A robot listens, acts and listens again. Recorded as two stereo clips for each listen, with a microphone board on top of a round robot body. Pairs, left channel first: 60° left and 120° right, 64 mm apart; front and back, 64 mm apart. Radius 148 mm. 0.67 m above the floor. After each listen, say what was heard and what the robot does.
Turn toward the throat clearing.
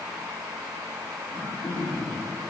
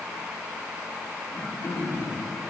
The throat clearing: 55° left. Turn 55° left.
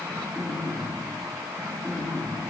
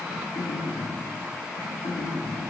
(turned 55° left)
The throat clearing is now 10° right. Turn 10° right.
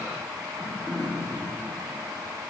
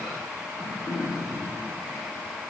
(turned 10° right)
Found it: throat clearing, straight ahead, 2 to 4 m away.